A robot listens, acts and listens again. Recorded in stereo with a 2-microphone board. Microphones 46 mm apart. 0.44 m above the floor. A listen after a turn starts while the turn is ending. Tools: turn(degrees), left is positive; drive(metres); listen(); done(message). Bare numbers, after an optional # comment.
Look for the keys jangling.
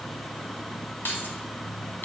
# The keys jangling: about 45° left or 135° left.
turn(45)
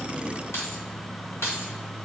# So it is at 105° left.
turn(105)
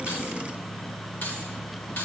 listen()
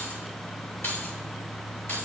# The keys jangling is now 60° left.
turn(60)
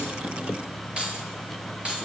# The keys jangling is now 25° right.
turn(-25)
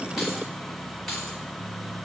listen()
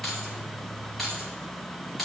done("Facing the keys jangling.")